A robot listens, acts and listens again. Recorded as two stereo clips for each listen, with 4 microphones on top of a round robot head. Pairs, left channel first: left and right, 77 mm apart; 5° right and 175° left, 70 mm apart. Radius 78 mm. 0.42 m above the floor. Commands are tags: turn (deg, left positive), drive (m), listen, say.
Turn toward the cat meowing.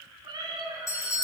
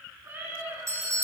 <turn deg="-115"/>
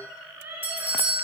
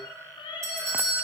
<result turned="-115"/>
<turn deg="-25"/>
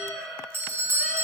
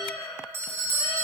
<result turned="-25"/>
<say>Facing the cat meowing.</say>